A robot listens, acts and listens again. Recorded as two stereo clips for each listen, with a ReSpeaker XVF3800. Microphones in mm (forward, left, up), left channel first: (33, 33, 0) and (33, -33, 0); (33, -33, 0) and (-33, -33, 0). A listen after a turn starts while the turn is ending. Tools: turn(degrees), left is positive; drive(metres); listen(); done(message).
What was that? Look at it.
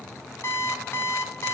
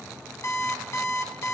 turn(degrees=40)
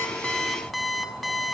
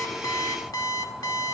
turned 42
done("Found it: an alarm clock, straight ahead, 1 to 2 m away.")